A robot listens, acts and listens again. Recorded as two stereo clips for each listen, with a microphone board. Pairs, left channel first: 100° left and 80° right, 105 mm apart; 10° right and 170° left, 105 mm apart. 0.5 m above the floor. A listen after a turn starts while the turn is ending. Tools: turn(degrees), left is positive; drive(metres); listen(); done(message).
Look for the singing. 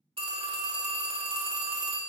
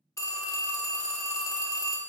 listen()
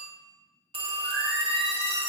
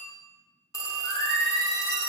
turn(degrees=90)
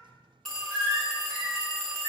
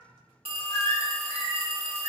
turn(degrees=40)
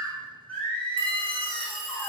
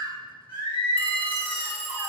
turn(degrees=25)
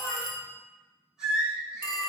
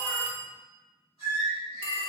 done("Found it: singing, straight ahead, 1 to 2 m away.")